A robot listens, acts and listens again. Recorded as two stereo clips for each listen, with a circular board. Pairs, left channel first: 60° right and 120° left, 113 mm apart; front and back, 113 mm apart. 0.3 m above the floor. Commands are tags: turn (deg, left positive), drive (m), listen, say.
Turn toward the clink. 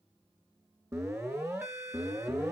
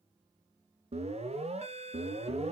<listen/>
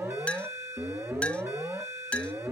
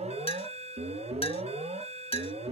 <turn deg="20"/>
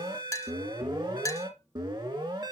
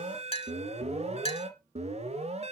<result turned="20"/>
<say>Facing the clink.</say>